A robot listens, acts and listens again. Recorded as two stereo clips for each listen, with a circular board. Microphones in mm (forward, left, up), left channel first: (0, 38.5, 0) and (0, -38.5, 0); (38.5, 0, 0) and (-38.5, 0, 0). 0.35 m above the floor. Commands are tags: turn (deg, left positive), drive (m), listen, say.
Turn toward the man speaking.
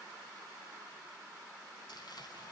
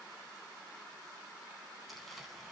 <listen/>
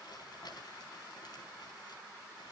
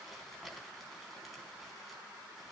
<listen/>
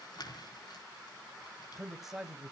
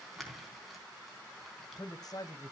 <turn deg="-15"/>
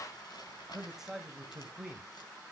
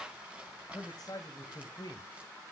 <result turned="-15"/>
<turn deg="-10"/>
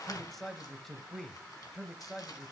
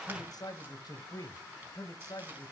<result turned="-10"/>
<say>Found it: a man speaking, straight ahead, 1 to 2 m away.</say>